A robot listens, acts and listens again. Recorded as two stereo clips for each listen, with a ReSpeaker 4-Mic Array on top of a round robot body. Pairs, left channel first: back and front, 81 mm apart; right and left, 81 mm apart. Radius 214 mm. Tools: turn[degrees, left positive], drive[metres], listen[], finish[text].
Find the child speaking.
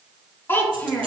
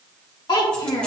Thought: The child speaking: 110° right.
Action: turn[-110]
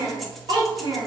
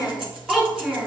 Action: finish[Facing the child speaking.]